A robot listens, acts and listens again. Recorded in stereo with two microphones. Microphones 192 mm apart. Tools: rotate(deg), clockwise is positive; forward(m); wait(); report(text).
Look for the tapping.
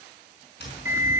rotate(-60)
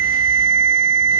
wait()
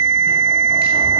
wait()
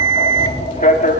rotate(-55)
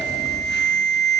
wait()
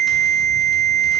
wait()
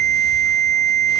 report("Facing where the tapping came from. I can't hear it now.")